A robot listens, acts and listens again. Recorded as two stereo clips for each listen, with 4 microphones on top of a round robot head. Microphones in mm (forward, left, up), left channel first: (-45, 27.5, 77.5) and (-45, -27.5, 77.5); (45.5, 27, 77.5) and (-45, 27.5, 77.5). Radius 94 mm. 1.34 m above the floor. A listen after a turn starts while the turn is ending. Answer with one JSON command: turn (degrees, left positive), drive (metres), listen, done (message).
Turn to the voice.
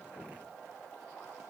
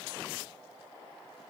{"listen": true}
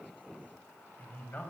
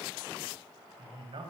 {"turn": 150}
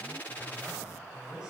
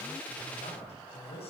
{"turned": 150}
{"turn": -10}
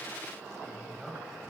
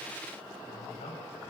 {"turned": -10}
{"done": "Found it: a man speaking, straight ahead, over 4 m away."}